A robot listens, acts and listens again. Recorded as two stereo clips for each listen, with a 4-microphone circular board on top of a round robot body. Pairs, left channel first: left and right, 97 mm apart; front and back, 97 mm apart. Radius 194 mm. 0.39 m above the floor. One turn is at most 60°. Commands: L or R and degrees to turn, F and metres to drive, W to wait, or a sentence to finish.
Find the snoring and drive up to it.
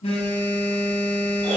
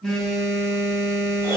W
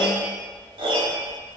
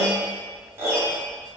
W
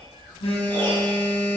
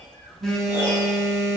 I can't make out snoring, only a piano and a phone buzzing.